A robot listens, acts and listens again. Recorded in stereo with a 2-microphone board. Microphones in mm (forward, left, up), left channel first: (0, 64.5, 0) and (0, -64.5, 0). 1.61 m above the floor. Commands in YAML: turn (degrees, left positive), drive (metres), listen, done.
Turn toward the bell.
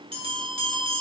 turn: -45
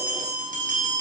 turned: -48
turn: -85
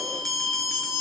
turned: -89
done: "Found it: a bell, straight ahead."